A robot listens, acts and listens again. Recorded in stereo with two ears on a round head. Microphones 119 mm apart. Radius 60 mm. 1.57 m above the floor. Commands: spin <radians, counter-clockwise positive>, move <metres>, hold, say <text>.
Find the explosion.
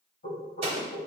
spin -0.87
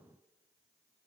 hold
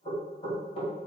say I heard an explosion, but can't make it out now. It was about straight ahead or 80° right.